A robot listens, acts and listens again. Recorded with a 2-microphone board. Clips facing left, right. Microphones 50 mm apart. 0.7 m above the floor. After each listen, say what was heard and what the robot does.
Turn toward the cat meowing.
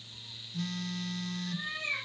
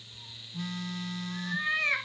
The cat meowing: about 65° right or 115° right. Turn 65° right.
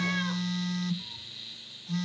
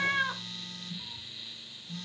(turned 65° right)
Keep listening.
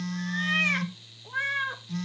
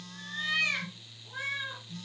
So it is at 45° left. Turn 45° left.
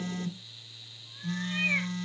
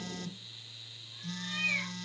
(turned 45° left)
Keep listening.
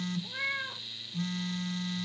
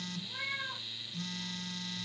The cat meowing is now 30° left. Turn 30° left.
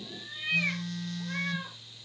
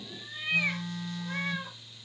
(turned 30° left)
Found it: a cat meowing, straight ahead.